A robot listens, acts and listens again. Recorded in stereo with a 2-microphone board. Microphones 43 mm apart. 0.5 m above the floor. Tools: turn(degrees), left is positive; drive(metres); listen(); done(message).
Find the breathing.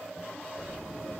listen()
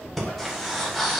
turn(degrees=30)
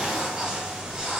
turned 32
listen()
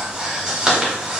turn(degrees=-25)
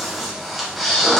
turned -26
done("Found it: breathing, straight ahead, 1 to 2 m away.")